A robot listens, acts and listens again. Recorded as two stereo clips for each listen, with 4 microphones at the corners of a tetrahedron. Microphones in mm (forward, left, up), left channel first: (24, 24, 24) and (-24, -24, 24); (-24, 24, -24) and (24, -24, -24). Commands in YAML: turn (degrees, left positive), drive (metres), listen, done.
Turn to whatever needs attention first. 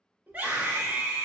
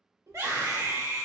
turn: -70
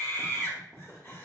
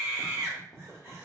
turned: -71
done: "Facing the scream, 1 to 2 m away."